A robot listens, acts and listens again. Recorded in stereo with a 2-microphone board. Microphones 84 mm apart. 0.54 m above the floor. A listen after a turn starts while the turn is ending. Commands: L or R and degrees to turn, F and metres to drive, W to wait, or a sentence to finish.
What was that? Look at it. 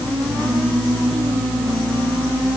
W
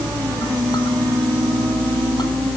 W
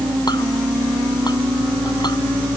I can't make out anything to turn to.